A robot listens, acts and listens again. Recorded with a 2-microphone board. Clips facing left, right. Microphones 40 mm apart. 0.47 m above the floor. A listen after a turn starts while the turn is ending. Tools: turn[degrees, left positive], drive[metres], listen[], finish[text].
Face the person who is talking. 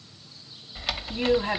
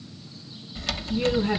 Thought: The woman speaking: about 65° left or 115° left.
Action: turn[65]
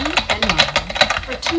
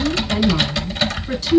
Thought: So it is at 50° left.
Action: turn[50]
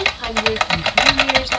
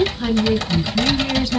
Thought: The woman speaking is now 20° left.
Action: turn[20]
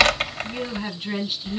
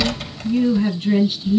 Action: finish[Facing the woman speaking.]